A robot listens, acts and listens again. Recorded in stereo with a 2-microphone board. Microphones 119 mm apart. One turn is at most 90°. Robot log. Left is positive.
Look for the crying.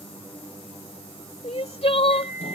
note: The crying: about 55° left or 125° left.
cmd yaw +55
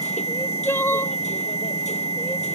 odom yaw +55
note: So it is at 25° left.
cmd yaw +25
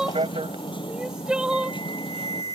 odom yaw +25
note: The crying is now 10° right.
cmd yaw -10
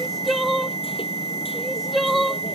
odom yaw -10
end: Facing the crying.